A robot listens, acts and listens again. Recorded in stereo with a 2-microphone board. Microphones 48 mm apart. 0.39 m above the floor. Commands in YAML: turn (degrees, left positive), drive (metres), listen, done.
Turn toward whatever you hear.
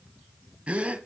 turn: -30
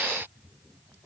listen: true
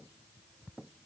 done: "I heard a gasp, but can't make it out now. It was about straight ahead or 120° right."